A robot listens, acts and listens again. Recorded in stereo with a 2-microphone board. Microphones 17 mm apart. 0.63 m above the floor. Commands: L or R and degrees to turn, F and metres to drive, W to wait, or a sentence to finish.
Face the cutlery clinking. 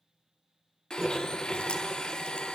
R25
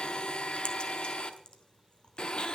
W
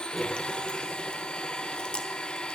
Found it: cutlery clinking, straight ahead.